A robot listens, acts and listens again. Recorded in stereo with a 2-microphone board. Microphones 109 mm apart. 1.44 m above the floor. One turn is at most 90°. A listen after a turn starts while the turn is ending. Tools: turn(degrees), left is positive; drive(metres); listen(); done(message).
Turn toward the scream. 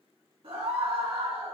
turn(degrees=-60)
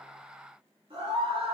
turn(degrees=-60)
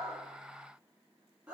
turn(degrees=-10)
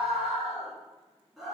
done("Found it: a scream, straight ahead.")